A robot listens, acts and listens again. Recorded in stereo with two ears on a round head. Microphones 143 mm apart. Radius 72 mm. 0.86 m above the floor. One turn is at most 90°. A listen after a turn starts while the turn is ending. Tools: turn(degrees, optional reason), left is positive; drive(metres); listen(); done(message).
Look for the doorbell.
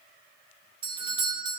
turn(degrees=-30, reason="The doorbell: about 30° right or 150° right.")
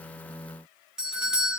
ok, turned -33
done("Found it: a doorbell, straight ahead, 1 to 2 m away.")